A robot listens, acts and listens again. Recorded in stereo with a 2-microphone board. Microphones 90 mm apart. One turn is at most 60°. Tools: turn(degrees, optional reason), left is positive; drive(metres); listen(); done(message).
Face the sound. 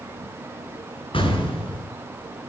turn(degrees=60, reason="The explosion: about 70° left or 110° left.")
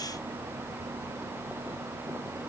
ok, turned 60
listen()
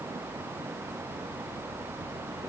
done("I heard an explosion, but can't make it out now. It was about 10° left or 50° left.")